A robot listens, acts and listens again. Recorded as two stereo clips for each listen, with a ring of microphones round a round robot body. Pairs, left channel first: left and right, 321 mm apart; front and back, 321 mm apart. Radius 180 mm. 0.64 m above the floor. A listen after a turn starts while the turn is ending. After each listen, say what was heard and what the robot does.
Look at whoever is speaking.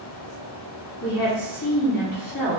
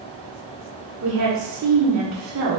The woman speaking: 150° left. Turn 150° left.
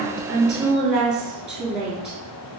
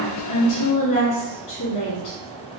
Facing the woman speaking.